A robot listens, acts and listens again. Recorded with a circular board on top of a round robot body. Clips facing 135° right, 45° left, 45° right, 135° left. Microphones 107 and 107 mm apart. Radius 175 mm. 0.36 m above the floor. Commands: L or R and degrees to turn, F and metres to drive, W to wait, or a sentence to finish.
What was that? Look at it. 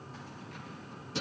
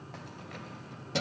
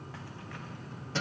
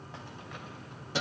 L60
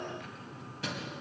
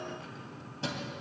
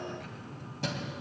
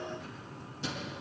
R15
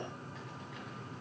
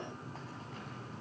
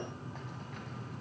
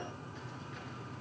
W
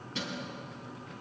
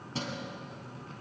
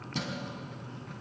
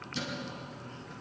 R10
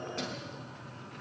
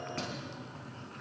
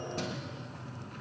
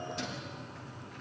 Found it: keys jangling, straight ahead.